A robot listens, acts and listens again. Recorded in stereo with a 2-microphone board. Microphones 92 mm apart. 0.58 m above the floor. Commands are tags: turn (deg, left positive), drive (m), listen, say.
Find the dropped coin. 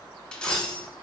<turn deg="30"/>
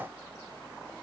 <listen/>
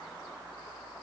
<say>I heard a dropped coin, but can't make it out now. It was about 20° right or 140° left.</say>